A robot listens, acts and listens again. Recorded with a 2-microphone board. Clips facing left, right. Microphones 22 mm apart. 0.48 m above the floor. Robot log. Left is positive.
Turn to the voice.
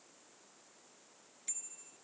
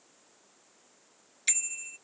cmd idle
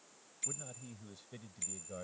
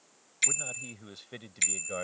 note: The man speaking: about 50° right or 130° right.
cmd yaw -50
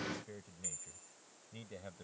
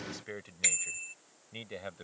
note: So it is at 40° right.
cmd yaw -40
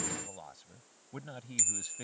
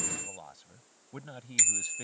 end: Found it: a man speaking, straight ahead.